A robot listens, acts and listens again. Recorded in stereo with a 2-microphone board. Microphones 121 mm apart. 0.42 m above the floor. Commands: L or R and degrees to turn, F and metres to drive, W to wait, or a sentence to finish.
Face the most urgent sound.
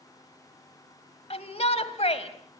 L60
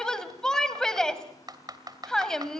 Facing the shout, 2 to 4 m away.